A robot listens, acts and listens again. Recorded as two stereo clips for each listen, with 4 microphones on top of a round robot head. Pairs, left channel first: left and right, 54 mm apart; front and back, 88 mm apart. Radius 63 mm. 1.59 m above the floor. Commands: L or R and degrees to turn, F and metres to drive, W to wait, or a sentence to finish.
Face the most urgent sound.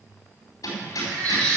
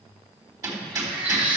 R105
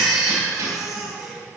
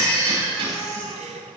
Found it: a baby crying, straight ahead.